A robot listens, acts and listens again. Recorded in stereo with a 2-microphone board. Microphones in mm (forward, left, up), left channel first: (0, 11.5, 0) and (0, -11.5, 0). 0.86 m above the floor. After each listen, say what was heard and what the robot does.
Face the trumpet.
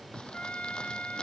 The trumpet: about 60° left or 120° left. Turn 60° left.
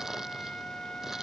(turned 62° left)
So it is at 55° left. Turn 55° left.
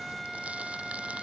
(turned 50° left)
Facing the trumpet.